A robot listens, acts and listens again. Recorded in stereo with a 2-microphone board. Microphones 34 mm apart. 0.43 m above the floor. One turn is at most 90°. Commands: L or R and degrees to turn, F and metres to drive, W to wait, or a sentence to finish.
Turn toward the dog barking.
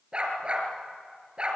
R25
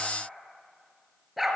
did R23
Facing the dog barking, 2 to 4 m away.